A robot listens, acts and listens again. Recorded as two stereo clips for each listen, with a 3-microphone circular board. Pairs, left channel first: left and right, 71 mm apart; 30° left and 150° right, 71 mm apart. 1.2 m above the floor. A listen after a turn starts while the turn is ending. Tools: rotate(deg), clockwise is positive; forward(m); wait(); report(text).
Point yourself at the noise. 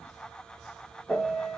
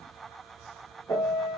report("Found it: a piano, straight ahead.")